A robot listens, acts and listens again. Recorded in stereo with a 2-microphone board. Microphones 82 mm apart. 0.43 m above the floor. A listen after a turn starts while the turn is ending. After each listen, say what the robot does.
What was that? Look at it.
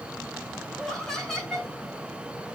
Turn 30° left.
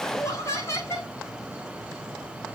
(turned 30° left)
Turn 140° left.
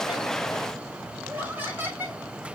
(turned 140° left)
Turn 25° right.
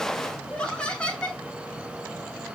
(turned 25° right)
Turn 10° left.
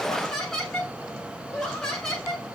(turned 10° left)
Found it: laughter, straight ahead, over 4 m away.